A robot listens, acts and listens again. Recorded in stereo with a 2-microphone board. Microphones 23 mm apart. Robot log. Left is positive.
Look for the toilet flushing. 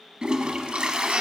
note: The toilet flushing: about 45° right or 135° right.
cmd yaw -45
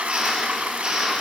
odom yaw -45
note: So it is at 90° right.
cmd yaw -90
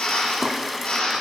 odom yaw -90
end: Found it: a toilet flushing, straight ahead.